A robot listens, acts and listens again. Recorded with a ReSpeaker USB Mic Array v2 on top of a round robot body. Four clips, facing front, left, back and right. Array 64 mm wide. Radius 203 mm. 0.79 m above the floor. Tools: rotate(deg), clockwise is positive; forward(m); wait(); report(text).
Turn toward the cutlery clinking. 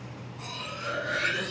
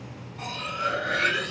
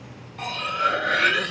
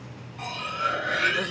rotate(-180)
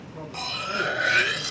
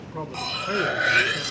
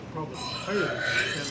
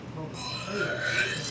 rotate(-60)
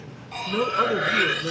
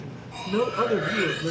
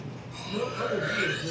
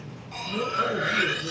rotate(20)
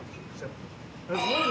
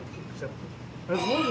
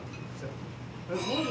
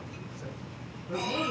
report("Facing the cutlery clinking, under 1 m away.")